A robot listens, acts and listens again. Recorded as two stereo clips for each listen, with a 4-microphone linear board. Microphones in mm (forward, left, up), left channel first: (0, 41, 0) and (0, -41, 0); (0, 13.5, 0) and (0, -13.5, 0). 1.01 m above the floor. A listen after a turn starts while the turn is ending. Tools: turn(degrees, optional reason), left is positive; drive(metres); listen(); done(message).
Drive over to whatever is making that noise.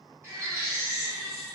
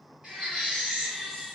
turn(degrees=-30, reason="The baby crying: about 30° right or 150° right.")
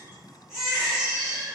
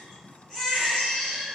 drive(metres=1.0)
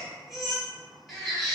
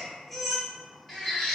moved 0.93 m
drive(metres=1.0)
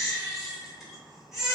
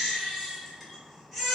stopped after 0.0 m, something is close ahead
done("I am next to the baby crying.")